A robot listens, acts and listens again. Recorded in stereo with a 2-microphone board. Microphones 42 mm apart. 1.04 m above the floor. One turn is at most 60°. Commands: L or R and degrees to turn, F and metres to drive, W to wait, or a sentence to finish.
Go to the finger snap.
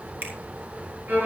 R60
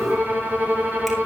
W
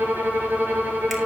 W
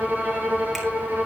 I heard a finger snap, but can't make it out now. It was about straight ahead or 60° right. I did not reach it.